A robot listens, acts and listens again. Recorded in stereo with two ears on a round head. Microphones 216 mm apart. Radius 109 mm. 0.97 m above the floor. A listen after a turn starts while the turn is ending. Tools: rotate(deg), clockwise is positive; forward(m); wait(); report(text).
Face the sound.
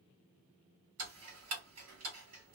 rotate(65)
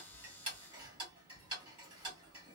rotate(20)
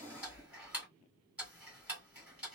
report("Found it: ticking, straight ahead.")